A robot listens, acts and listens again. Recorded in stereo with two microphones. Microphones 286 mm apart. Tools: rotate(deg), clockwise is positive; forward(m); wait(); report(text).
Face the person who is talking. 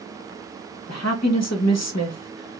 rotate(-70)
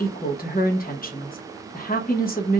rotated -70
rotate(-35)
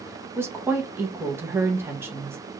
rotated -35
rotate(10)
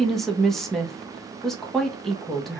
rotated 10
report("Found it: a woman speaking, straight ahead.")